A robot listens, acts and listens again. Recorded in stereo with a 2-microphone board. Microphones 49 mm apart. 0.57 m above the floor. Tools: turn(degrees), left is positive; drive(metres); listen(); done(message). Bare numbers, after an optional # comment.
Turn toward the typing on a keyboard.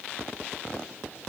listen()
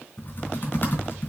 # The typing on a keyboard: about 45° left or 135° left.
turn(45)
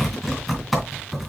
done("Found it: typing on a keyboard, straight ahead.")